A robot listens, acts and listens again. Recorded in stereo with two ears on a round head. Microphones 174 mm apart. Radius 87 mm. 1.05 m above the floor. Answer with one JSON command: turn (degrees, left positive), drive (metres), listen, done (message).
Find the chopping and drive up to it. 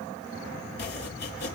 {"turn": 55}
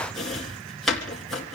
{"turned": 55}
{"drive": 1.0}
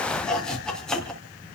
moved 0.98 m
{"drive": 1.0}
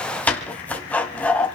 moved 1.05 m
{"turn": 10}
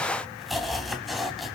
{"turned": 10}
{"drive": 1.0}
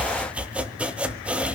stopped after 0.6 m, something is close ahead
{"turn": -10}
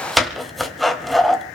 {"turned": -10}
{"done": "Arrived at the chopping, straight ahead."}